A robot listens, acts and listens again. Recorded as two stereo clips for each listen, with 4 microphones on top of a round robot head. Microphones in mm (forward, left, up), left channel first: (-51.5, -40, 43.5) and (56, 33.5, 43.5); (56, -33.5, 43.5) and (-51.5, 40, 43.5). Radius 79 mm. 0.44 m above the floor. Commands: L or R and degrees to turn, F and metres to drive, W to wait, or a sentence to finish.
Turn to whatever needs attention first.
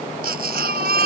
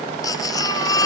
L30
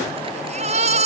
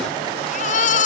Facing the baby crying.